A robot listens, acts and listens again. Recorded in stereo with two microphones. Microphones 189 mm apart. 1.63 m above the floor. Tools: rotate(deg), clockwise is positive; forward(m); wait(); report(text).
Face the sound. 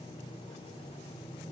wait()
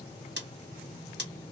rotate(65)
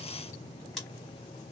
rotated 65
report("Facing the scissors.")